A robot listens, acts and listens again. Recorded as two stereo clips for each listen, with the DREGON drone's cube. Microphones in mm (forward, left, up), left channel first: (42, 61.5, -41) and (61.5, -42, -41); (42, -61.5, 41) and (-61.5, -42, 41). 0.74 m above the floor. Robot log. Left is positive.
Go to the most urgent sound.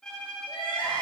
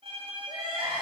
note: The crying: 130° left.
cmd yaw +130
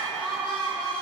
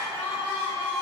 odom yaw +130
note: The crying is now 55° left.
cmd yaw +55
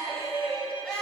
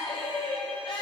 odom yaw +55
note: The crying is now 15° left.
cmd yaw +15
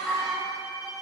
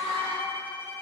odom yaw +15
cmd fwd 1.0
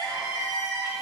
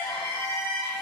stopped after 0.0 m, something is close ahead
end: Something is in my way. I am facing the crying but have not reached it.